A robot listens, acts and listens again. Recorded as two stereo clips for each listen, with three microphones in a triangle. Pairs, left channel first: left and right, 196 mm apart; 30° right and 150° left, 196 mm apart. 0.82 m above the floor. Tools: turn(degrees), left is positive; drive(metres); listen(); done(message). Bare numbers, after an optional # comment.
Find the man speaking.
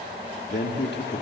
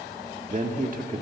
# The man speaking: 110° left.
turn(110)
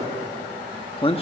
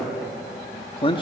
# The man speaking is now 30° left.
turn(30)
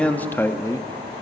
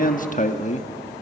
# The man speaking is now 20° left.
turn(20)
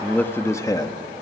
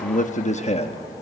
# The man speaking is now 20° left.
turn(20)
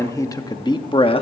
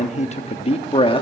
# The man speaking is now 30° left.
turn(30)
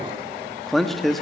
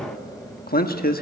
done("Found it: a man speaking, straight ahead, 1 to 2 m away.")